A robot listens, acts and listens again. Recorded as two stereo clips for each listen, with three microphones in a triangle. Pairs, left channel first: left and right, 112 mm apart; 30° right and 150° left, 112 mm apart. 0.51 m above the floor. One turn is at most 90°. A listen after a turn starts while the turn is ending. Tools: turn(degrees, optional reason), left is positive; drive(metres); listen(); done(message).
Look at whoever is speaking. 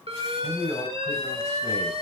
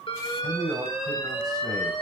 turn(degrees=90, reason="The man speaking: 95° left.")
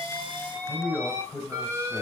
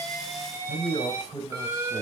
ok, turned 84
turn(degrees=10, reason="The man speaking is now 10° left.")
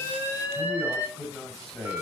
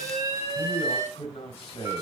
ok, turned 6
done("Facing the man speaking.")